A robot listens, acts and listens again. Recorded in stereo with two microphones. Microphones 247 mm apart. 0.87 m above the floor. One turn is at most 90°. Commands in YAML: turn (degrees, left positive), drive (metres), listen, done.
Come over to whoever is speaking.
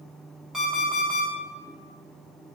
listen: true
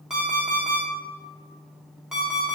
listen: true
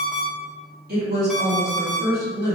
turn: -40
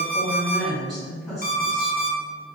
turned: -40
drive: 1.0
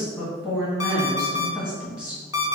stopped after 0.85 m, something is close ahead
done: "I am next to the woman speaking."